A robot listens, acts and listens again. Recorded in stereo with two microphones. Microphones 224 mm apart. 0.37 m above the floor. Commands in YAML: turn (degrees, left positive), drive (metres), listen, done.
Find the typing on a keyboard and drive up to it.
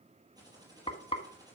turn: -15
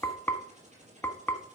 turn: -150
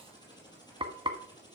turn: 20
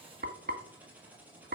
drive: 1.0
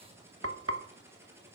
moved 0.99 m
turn: -10
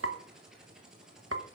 drive: 1.0
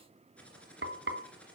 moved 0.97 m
drive: 1.0
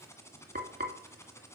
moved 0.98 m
turn: 10
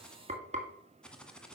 drive: 1.0
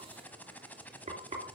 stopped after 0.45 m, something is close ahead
done: "I am next to the typing on a keyboard."